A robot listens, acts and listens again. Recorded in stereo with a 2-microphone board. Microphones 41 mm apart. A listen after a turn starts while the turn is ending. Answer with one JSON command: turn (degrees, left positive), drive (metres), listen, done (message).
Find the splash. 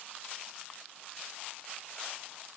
{"listen": true}
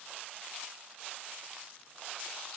{"listen": true}
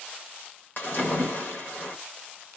{"turn": 55}
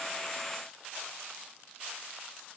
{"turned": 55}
{"listen": true}
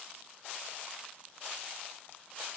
{"done": "I heard a splash, but can't make it out now. It was about straight ahead or 70° left."}